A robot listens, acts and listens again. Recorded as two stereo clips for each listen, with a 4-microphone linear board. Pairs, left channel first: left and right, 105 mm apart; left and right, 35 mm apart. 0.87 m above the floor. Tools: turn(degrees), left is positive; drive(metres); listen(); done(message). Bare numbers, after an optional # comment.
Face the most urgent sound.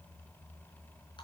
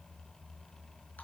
listen()
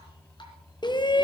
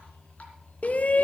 # The shout: about 45° left or 135° left.
turn(45)
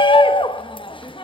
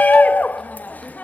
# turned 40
# So it is at 80° left.
turn(80)
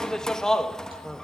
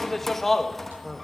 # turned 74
done("Facing the shout.")